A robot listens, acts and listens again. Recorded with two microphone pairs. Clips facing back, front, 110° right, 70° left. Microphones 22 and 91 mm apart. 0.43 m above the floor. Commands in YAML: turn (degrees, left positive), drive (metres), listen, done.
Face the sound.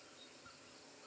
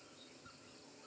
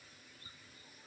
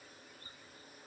listen: true
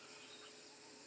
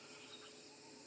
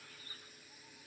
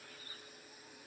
listen: true
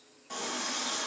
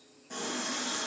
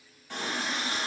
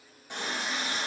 turn: 135
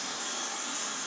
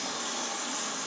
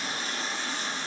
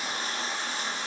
done: "Facing the running tap."